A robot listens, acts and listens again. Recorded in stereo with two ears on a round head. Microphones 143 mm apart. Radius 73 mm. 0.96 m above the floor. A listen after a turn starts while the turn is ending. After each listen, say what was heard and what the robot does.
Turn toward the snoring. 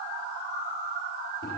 Keep listening.
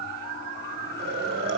The snoring: about 70° right or 110° right. Turn 70° right.
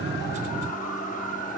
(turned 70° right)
Keep listening.
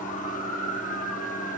Keep listening.
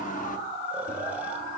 I heard snoring, but can't make it out now. It was about straight ahead or 40° right.